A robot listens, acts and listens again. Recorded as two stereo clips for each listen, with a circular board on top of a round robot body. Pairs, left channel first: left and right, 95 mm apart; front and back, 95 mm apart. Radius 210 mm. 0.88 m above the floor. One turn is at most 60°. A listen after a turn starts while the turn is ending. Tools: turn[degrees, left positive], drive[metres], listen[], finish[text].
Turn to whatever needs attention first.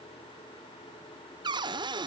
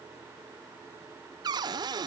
Action: listen[]
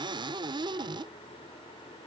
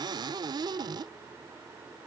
Action: listen[]
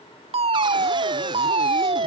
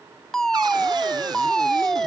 Thought: The fire alarm: 85° right.
Action: turn[-60]
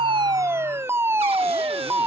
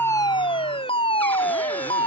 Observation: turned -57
Thought: The fire alarm is now 25° right.
Action: turn[-25]
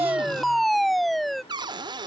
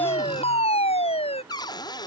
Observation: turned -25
Action: finish[Found it: a fire alarm, straight ahead.]